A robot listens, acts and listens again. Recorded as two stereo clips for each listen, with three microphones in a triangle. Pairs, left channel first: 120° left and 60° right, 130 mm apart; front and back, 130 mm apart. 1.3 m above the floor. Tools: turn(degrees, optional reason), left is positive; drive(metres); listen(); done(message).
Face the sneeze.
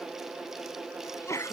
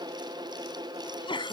turn(degrees=50, reason="The sneeze: 50° left.")
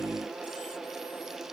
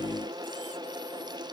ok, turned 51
done("Facing where the sneeze came from. I can't hear it now.")